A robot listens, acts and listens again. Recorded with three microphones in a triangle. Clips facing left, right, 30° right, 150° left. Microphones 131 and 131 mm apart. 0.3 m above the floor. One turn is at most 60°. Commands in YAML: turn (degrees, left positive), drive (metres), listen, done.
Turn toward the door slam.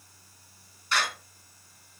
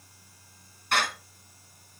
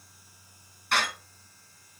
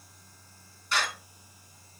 turn: -55
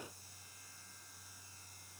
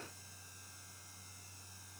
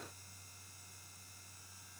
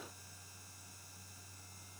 done: "I heard a door slam from this way, but can't make it out now."